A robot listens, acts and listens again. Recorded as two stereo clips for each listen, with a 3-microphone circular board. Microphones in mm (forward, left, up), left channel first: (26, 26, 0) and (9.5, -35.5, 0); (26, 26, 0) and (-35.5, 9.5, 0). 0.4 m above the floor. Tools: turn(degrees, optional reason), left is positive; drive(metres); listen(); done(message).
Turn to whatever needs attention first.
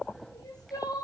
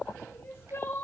turn(degrees=65, reason="The crying: 65° left.")
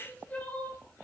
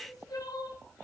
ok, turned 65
done("Facing the crying, over 4 m away.")